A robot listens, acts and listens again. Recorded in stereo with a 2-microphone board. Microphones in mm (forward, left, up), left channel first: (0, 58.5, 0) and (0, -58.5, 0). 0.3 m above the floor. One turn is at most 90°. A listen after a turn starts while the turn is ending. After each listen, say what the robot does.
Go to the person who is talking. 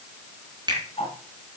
Keep listening.
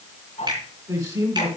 Turn 30° right.
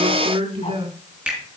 Turn 90° right.
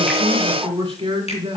Turn 45° right.
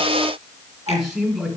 Drive 1.0 m forward.
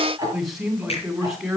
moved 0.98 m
Drive 1.0 m forward.
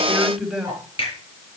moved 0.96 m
Drive 1.0 m forward.
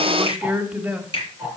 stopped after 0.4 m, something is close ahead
Turn 15° right.
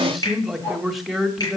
I am next to the man speaking.